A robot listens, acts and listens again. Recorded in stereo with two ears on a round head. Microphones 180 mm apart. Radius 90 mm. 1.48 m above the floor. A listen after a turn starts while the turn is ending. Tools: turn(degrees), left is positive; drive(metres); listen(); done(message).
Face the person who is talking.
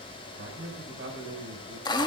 turn(degrees=-55)
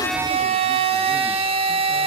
listen()
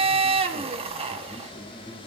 listen()
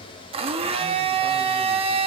done("I heard a man speaking, but can't make it out now. It was about straight ahead or 70° right.")